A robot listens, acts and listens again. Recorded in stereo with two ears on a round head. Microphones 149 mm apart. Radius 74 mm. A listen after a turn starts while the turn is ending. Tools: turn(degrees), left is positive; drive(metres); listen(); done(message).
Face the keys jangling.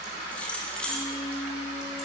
turn(degrees=30)
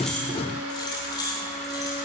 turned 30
turn(degrees=155)
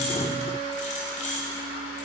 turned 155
turn(degrees=45)
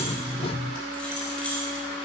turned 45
done("Facing the keys jangling, over 4 m away.")